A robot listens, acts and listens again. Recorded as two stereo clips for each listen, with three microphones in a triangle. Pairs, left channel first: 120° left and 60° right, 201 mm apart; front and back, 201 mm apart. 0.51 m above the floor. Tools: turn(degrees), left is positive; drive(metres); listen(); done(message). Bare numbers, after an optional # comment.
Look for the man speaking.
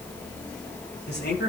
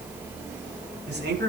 # The man speaking: 150° left.
turn(150)
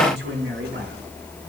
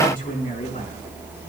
# The man speaking is now 45° right.
turn(-45)
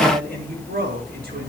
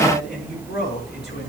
# The man speaking is now 25° right.
turn(-25)
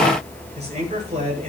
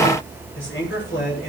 done("Found it: a man speaking, straight ahead.")